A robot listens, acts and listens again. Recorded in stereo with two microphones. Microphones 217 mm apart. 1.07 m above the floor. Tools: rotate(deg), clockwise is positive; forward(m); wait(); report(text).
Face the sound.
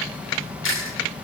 rotate(70)
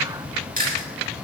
rotate(40)
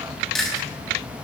report("Facing the chewing, over 4 m away.")